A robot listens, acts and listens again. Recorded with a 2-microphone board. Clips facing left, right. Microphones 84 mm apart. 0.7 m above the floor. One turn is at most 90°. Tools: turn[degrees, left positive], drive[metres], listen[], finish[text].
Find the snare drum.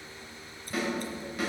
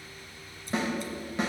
Thought: The snare drum: about 25° right or 155° right.
Action: turn[-25]
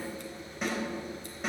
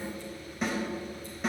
Action: finish[Found it: a snare drum, straight ahead.]